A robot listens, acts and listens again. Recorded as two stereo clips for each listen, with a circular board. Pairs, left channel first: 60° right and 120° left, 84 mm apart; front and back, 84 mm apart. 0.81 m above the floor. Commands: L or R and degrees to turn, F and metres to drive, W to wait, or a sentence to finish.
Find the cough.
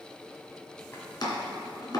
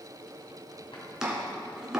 W
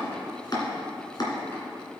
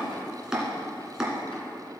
W
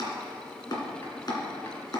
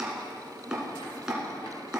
I can't make out a cough to turn to.